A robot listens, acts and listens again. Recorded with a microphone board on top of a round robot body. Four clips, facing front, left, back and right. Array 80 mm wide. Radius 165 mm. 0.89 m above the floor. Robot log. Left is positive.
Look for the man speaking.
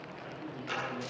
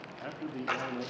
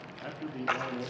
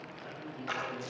note: The man speaking: 125° left.
cmd yaw +125
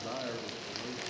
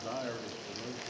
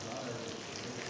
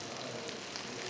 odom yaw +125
note: The man speaking is now 55° left.
cmd yaw +55
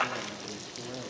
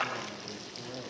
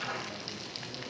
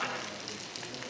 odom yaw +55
cmd idle
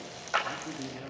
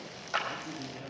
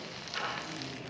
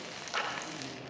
cmd idle
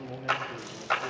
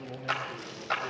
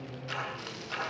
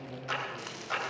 note: The man speaking is now 25° left.
cmd yaw +25
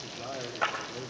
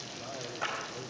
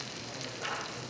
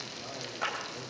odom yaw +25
cmd idle
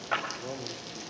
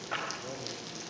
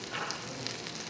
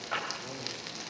cmd idle
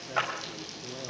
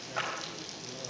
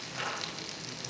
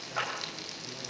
end: I heard a man speaking from this way, but can't make it out now.